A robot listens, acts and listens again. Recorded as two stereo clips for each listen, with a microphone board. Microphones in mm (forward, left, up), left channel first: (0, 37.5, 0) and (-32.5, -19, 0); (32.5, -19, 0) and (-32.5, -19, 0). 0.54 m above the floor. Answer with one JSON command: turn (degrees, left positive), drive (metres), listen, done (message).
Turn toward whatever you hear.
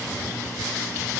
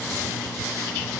{"listen": true}
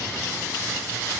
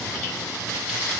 {"listen": true}
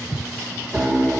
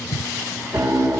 {"turn": 175}
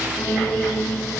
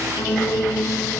{"turn": 30}
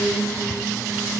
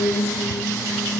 {"done": "Facing the piano."}